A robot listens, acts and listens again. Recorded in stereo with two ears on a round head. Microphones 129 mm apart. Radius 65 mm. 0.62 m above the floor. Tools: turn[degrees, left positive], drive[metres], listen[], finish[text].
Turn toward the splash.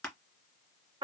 Action: listen[]
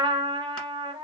Action: listen[]
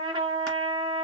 Action: finish[I can't make out a splash to turn to.]